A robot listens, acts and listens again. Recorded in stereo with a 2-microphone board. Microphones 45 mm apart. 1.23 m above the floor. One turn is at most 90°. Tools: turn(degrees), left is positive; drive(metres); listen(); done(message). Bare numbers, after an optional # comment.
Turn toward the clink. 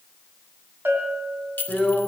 # The clink: about 40° left or 140° left.
turn(40)
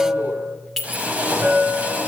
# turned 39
done("Found it: a clink, straight ahead, 2 to 4 m away.")